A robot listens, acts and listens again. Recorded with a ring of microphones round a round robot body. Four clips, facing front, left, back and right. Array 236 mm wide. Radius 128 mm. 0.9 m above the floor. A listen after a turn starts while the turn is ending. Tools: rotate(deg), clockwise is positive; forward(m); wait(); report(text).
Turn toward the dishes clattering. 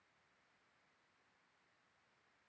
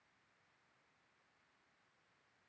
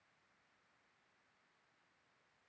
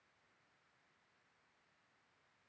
wait()
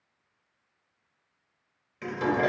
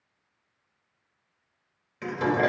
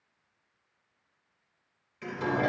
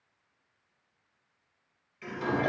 rotate(-65)
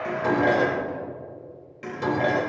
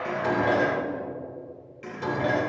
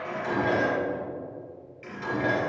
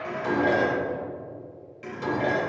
report("Facing the dishes clattering, 2 to 4 m away.")